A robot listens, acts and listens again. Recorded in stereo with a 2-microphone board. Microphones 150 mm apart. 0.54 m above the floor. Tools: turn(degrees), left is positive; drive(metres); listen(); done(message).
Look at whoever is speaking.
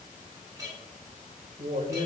turn(degrees=-60)
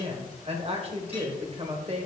turn(degrees=-50)
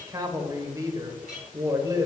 turn(degrees=-25)
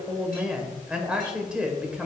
done("Found it: a woman speaking, straight ahead, 1 to 2 m away.")